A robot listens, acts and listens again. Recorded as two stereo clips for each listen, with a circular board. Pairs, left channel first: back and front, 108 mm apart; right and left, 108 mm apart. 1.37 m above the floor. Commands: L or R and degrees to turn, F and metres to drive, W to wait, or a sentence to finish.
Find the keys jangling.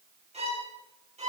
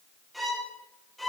W
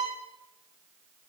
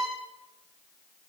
W
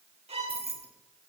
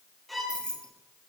Facing the keys jangling, 1 to 2 m away.